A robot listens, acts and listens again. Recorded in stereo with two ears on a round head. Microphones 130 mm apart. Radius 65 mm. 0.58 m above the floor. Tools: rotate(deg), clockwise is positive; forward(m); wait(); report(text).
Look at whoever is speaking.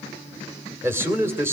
rotate(15)
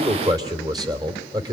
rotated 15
rotate(150)
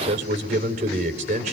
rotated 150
rotate(60)
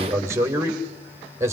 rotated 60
rotate(20)
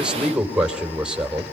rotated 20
report("Facing the man speaking.")